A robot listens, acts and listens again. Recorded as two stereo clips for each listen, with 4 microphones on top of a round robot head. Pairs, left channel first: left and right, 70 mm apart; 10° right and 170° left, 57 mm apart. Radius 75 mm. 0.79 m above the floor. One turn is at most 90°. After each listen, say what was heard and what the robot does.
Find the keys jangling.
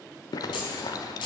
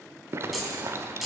The keys jangling: 85° left. Turn 85° left.
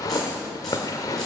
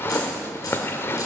Keep listening.
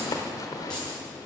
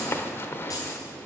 The keys jangling is now 10° left. Turn 10° left.
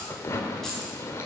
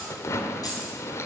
Keep listening.
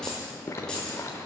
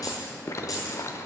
The keys jangling is now 10° left. Turn 10° left.
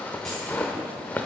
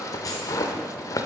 Keep listening.
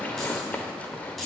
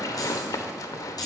Found it: keys jangling, straight ahead.